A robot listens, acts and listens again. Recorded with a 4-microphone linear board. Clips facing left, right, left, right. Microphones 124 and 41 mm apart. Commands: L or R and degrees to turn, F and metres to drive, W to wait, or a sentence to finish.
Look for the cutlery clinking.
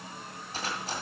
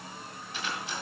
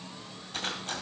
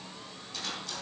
L40
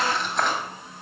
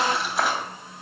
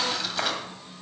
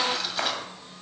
Found it: cutlery clinking, straight ahead.